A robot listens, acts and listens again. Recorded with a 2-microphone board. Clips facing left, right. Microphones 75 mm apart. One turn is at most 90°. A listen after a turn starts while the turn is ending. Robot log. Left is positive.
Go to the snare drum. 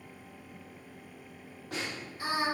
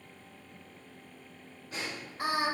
cmd yaw +90
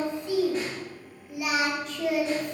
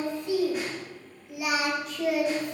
cmd idle
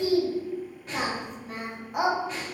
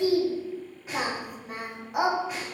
cmd fwd 1.0
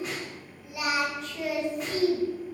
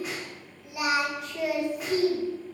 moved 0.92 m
cmd fwd 1.0
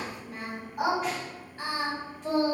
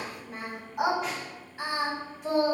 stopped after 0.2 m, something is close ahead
cmd idle
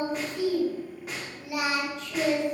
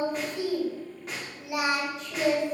end: I am next to the snare drum.